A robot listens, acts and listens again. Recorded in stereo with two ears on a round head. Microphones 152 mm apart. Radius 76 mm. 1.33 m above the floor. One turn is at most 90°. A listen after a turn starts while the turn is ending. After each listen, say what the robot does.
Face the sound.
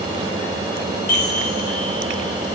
Turn 45° left.
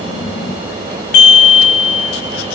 Turn 80° left.
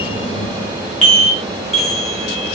Facing the chime.